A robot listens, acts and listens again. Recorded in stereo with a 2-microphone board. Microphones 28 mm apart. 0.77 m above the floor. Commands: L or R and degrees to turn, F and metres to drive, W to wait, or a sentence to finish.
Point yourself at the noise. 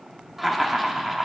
R30
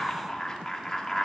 L25
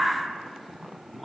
Facing the laughter, 1 to 2 m away.